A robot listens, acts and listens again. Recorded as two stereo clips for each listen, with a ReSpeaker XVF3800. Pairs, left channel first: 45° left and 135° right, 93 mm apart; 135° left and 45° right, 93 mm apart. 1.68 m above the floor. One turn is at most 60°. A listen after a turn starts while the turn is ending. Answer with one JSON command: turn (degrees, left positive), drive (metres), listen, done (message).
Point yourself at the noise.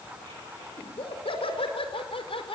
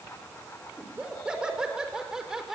{"turn": 40}
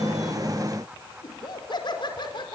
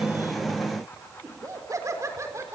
{"turn": 15}
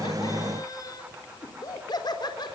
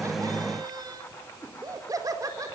{"done": "Found it: laughter, straight ahead, 2 to 4 m away."}